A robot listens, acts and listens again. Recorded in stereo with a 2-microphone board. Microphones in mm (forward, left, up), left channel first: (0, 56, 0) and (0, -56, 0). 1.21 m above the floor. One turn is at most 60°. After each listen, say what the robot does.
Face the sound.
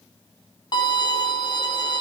Turn 40° left.
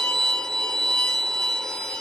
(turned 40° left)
Facing the violin.